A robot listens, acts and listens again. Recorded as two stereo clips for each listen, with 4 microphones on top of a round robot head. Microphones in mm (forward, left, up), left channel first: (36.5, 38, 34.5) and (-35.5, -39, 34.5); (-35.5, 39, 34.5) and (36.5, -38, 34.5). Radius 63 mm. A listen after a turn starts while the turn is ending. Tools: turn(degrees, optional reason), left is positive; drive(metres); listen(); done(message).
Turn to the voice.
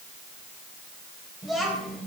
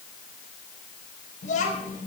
turn(degrees=140, reason="The child speaking: 140° left.")
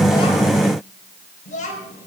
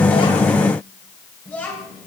turn(degrees=55, reason="The child speaking is now 55° left.")
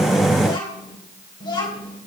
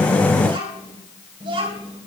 done("Facing the child speaking.")